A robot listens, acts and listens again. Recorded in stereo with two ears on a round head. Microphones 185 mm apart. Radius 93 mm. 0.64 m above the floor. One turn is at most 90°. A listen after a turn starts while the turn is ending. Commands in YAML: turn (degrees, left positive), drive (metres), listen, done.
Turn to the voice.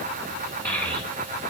turn: 30
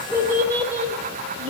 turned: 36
turn: -30
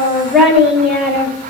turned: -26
done: "Facing the child speaking, 1 to 2 m away."